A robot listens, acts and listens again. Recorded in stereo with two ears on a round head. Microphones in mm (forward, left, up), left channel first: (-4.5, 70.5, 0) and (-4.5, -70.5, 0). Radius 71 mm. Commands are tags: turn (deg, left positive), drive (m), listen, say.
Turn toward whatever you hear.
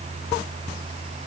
<listen/>
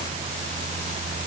<listen/>
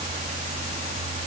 <say>I can't make out anything to turn to.</say>